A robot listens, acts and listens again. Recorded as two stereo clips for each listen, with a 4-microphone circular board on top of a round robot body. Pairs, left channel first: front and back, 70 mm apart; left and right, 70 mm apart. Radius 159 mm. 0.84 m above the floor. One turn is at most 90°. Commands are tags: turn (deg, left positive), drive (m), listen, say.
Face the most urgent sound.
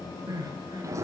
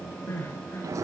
<turn deg="90"/>
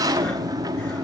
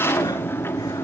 <turn deg="60"/>
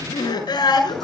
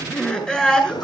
<turn deg="10"/>
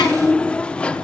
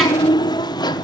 <listen/>
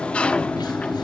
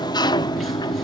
<listen/>
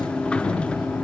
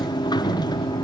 <say>I heard crying from this way, but can't make it out now.</say>